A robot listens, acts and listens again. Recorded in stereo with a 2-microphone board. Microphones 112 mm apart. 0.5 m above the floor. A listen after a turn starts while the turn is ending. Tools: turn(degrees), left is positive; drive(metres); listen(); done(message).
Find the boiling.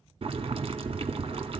turn(degrees=-60)
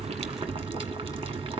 turn(degrees=-60)
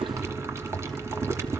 turn(degrees=-25)
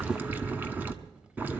turn(degrees=-15)
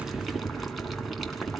done("Facing the boiling, 1 to 2 m away.")